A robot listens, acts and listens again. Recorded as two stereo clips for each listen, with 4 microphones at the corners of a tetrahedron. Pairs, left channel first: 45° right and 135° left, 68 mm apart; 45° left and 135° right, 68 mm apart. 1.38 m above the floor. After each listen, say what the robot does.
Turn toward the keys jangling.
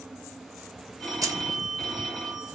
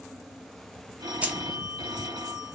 Turn 155° left.
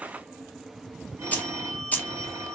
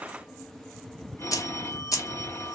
Turn 20° left.
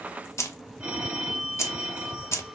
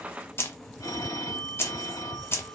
Facing the keys jangling, 1 to 2 m away.